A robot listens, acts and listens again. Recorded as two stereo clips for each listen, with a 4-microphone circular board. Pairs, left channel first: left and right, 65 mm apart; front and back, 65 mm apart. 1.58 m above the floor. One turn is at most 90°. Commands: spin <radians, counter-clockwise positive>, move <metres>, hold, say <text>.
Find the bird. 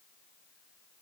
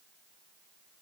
hold
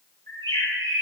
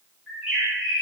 spin 1.57
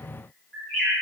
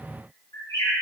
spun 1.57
spin 0.35
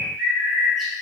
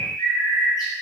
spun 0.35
say Facing the bird, 1 to 2 m away.